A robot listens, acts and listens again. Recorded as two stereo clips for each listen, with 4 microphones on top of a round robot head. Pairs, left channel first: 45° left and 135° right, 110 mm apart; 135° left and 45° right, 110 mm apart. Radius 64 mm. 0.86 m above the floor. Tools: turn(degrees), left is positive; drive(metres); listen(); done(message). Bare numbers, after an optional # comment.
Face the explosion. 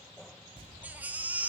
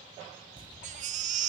# The explosion: 95° right.
turn(-95)
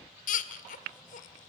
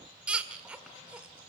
done("I heard an explosion from this way, but can't make it out now.")